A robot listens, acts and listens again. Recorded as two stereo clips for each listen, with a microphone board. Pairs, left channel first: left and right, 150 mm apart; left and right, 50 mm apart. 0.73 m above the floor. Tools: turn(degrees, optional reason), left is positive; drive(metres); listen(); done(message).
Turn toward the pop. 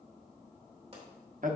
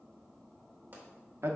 turn(degrees=-45, reason="The pop: about 45° right or 135° right.")
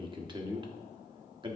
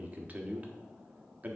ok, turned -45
listen()
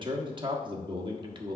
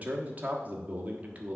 done("I heard a pop, but can't make it out now. It was about straight ahead or 90° right.")